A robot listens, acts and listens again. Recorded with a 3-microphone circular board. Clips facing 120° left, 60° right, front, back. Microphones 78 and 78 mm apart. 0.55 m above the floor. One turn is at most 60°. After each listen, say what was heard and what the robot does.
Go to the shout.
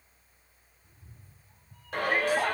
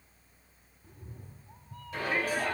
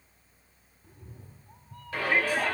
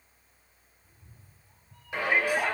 The shout: 110° left. Turn 60° left.
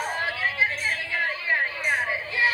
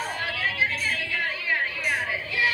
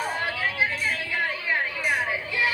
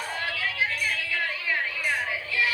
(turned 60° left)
The shout is now 70° left. Turn 60° left.
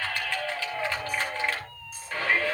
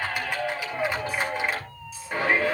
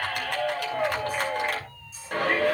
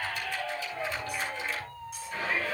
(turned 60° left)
The shout is now 15° left. Turn 15° left.
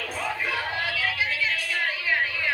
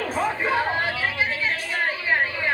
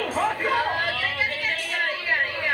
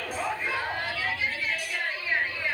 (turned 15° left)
Drive 1.0 m forward.
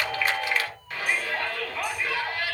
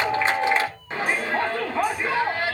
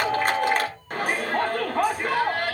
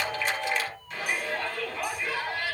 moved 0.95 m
Drive 1.0 m forward.
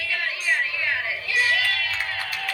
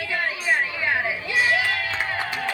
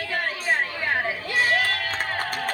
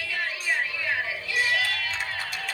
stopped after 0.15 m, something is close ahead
I am next to the shout.